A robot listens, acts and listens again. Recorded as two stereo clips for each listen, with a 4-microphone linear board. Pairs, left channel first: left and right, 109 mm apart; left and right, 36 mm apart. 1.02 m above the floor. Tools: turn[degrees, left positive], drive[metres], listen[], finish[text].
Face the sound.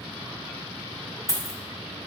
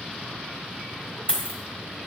Thought: The dropped coin: about 30° left or 150° left.
Action: turn[30]
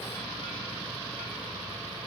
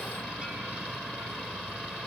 Action: listen[]
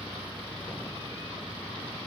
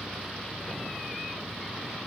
Action: finish[I heard a dropped coin, but can't make it out now. It was about straight ahead or 120° left.]